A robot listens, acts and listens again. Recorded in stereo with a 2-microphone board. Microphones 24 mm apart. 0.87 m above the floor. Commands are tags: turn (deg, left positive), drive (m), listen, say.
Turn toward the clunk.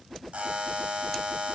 <listen/>
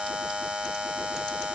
<listen/>
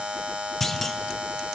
<turn deg="30"/>
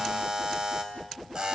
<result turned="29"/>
<listen/>
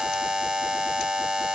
<say>I heard a clunk, but can't make it out now. It was about 15° right or 135° left.</say>